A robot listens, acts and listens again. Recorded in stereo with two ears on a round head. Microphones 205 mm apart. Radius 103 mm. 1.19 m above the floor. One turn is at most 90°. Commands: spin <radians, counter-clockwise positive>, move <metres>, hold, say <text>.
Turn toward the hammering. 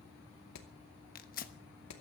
spin 1.57
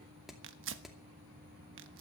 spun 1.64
say Facing the hammering, 2 to 4 m away.